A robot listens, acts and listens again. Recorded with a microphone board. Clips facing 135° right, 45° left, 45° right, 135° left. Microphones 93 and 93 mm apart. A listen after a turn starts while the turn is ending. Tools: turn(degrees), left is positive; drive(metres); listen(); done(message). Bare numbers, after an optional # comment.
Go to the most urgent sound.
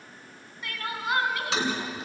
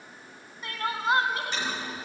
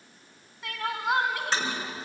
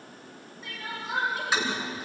# The crying: 20° right.
turn(-20)
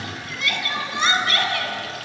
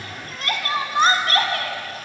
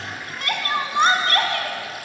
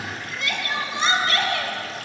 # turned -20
drive(1.0)
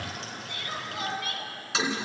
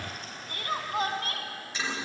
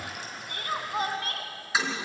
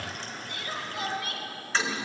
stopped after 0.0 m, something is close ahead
done("Something is in my way. I am facing the crying but have not reached it.")